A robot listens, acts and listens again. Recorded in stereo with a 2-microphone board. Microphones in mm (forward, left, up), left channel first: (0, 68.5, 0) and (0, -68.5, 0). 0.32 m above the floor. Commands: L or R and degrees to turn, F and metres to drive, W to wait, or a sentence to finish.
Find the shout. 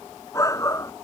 L25
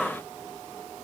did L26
W
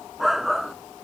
Facing the shout.